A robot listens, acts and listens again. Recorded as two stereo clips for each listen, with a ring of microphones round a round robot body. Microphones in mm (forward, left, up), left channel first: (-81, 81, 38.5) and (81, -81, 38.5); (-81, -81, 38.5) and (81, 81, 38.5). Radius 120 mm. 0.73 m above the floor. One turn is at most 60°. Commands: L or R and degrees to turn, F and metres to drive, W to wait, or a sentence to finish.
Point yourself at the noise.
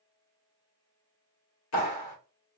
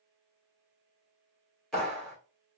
L60
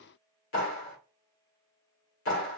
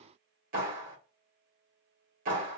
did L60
L60
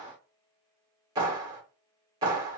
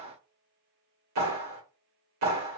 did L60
L30
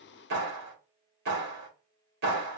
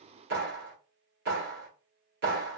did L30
Found it: a clap, straight ahead.